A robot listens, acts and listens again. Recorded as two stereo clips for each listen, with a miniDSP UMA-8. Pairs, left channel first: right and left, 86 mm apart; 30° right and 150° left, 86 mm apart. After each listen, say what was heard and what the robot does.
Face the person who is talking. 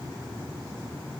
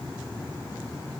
Keep listening.
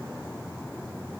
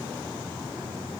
Keep listening.
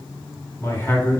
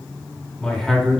The man speaking: 125° right. Turn 125° right.
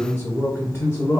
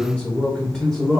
The man speaking is now 115° right. Turn 115° right.
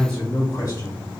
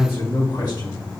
The man speaking is now 40° right. Turn 40° right.
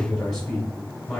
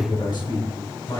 The man speaking is now 10° right. Turn 10° right.
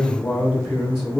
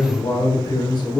Facing the man speaking, 1 to 2 m away.